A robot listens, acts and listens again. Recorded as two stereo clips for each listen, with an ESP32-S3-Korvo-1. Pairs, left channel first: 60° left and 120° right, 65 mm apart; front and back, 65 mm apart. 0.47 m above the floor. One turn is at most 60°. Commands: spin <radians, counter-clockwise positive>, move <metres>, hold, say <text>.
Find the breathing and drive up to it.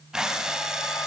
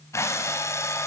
spin -0.70
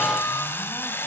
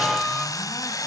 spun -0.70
spin 0.17
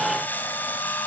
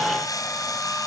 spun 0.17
move 1.0
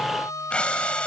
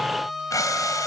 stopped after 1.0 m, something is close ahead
spin -0.17
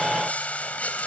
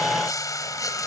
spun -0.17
say Blocked. The breathing is further on, straight ahead.